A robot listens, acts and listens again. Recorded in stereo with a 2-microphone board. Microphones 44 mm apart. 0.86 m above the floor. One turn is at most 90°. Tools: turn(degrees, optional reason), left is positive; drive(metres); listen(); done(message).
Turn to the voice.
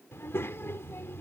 turn(degrees=70, reason="The child speaking: about 70° left or 110° left.")
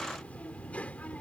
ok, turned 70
turn(degrees=35, reason="So it is at 35° left.")
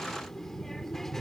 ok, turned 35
turn(degrees=10, reason="The child speaking is now 10° left.")
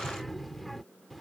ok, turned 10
done("Found it: a child speaking, straight ahead.")